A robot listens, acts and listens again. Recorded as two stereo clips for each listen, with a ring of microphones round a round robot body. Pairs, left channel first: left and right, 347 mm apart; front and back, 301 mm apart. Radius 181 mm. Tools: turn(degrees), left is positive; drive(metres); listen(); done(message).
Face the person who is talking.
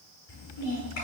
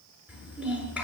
turn(degrees=95)
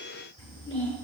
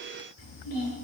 turn(degrees=15)
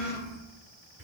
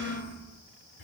done("Facing the child speaking, over 4 m away.")